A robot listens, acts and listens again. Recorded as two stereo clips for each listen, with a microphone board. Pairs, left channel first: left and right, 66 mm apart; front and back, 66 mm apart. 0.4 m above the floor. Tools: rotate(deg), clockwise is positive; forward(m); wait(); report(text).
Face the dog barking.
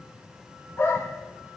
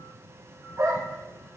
rotate(-140)
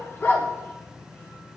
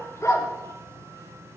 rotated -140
rotate(-35)
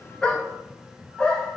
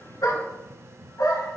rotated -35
rotate(-15)
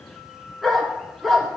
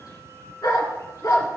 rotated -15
report("Facing the dog barking, 1 to 2 m away.")